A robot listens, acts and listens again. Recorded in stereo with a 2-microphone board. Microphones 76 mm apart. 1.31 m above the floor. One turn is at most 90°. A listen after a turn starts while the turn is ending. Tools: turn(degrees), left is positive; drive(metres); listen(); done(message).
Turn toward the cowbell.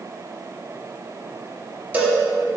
turn(degrees=-25)
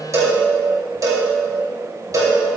turn(degrees=-90)
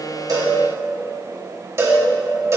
turn(degrees=-40)
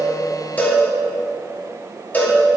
turn(degrees=25)
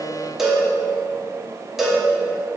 done("Found it: a cowbell, straight ahead, 2 to 4 m away.")